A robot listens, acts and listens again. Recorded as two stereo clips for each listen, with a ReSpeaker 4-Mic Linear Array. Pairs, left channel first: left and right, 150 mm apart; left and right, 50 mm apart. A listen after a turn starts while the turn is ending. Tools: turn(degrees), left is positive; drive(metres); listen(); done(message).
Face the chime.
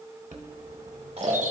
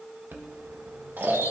turn(degrees=-55)
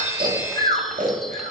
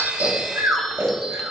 listen()
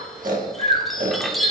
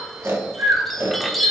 done("Found it: a chime, straight ahead.")